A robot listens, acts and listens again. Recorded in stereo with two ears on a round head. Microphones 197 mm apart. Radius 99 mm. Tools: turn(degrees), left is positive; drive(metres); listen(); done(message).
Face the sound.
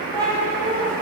turn(degrees=30)
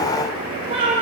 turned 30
turn(degrees=-25)
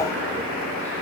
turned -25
listen()
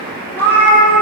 turn(degrees=10)
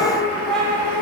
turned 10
done("Facing the cat meowing, 2 to 4 m away.")